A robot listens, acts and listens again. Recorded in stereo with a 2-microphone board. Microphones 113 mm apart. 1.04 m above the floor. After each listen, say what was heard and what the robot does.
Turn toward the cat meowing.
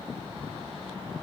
Keep listening.
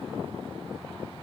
Keep listening.
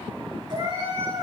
The cat meowing: about 40° right or 140° right. Turn 40° right.
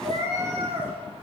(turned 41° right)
So it is at 105° right. Turn 105° right.
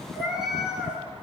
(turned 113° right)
Facing the cat meowing, over 4 m away.